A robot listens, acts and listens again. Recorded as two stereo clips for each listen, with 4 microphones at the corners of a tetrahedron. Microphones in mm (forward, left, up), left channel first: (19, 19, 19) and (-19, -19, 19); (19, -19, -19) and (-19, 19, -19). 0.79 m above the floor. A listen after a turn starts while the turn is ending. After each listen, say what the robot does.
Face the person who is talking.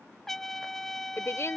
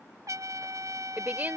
Turn 80° left.
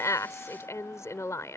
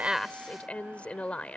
Turn 20° left.
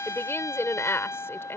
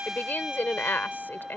Facing the woman speaking.